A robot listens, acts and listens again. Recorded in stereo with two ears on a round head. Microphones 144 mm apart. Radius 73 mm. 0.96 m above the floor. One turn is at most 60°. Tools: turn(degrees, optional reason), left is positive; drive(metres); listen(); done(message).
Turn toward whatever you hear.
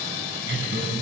turn(degrees=-60, reason="The laughter: about 65° right or 115° right.")
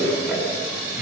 turn(degrees=-10, reason="So it is at 10° right.")
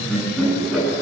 done("Found it: laughter, straight ahead.")